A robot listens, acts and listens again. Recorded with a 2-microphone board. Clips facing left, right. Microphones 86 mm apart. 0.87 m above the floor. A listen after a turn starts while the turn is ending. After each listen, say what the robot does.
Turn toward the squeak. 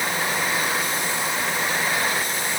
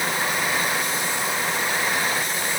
Keep listening.
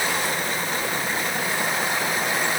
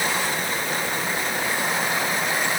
Keep listening.
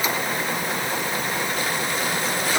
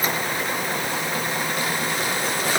I can't make out a squeak to turn to.